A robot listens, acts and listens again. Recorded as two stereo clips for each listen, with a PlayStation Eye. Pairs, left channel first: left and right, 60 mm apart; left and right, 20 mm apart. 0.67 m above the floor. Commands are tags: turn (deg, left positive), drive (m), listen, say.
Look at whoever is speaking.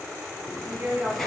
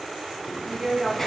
<turn deg="-25"/>
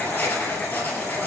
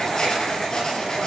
<listen/>
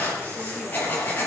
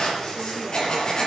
<listen/>
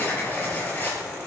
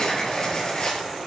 <say>I heard a woman speaking, but can't make it out now. It was about straight ahead or 130° right.</say>